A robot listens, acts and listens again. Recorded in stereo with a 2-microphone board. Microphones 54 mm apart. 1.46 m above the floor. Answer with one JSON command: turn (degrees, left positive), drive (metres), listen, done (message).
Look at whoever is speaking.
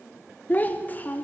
{"turn": 30}
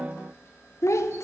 {"turn": 115}
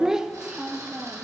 {"turn": -10}
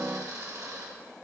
{"listen": true}
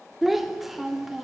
{"done": "Facing the child speaking."}